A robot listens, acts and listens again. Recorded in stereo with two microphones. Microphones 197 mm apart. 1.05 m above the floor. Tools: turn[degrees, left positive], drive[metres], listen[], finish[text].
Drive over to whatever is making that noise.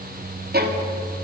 Thought: The violin: about 55° right or 125° right.
Action: turn[-55]
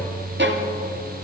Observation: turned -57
Thought: So it is at 70° right.
Action: turn[-70]
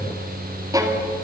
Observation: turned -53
Thought: The violin is now 20° right.
Action: turn[-20]
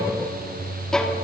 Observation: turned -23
Action: drive[1.0]
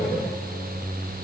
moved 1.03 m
Action: listen[]
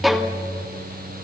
Action: drive[1.0]
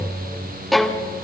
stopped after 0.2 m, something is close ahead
Action: finish[Arrived at the violin, straight ahead.]